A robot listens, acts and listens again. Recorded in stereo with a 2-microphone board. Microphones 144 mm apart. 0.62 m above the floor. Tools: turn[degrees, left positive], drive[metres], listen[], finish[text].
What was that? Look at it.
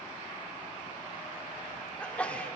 Action: turn[30]
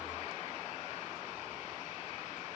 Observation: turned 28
Action: listen[]
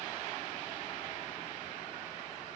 Action: finish[I heard a sneeze, but can't make it out now. It was about 20° right or 140° left.]